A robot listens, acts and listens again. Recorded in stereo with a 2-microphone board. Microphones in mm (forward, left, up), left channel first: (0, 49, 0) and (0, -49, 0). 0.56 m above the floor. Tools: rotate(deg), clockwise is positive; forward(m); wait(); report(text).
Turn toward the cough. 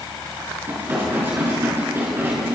wait()
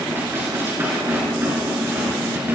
wait()
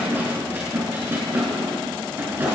report("I can't make out a cough, only dishes clattering.")